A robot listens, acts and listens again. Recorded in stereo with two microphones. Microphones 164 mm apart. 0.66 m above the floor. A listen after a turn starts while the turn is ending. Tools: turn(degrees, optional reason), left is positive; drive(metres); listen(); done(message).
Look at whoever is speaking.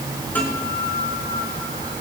listen()
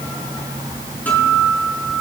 listen()
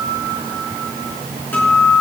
done("I can't make out anyone speaking to turn to.")